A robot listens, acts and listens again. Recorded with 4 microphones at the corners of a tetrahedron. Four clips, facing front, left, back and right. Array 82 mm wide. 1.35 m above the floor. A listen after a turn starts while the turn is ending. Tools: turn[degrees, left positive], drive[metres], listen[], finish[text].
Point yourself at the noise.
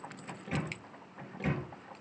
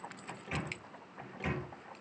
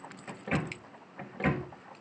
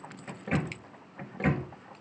Thought: The microwave: 140° right.
Action: turn[-140]
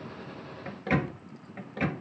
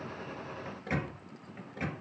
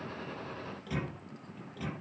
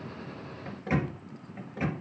Action: finish[Facing the microwave, 1 to 2 m away.]